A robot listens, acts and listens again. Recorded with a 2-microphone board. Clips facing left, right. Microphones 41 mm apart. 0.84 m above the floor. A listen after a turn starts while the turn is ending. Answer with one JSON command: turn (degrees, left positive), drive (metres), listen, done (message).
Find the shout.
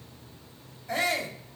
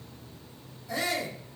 {"turn": 55}
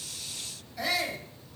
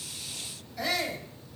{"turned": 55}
{"done": "Facing the shout, over 4 m away."}